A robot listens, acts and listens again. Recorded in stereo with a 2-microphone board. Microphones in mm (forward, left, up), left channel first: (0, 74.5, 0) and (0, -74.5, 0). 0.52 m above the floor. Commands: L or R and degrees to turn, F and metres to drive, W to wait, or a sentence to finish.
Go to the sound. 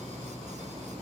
W
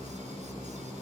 W
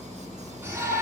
R15
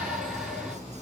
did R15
F1.0
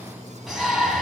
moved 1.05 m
F1.0
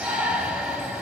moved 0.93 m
F1.0
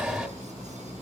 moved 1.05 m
F1.0
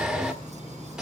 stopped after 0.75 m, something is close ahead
I am next to the shout.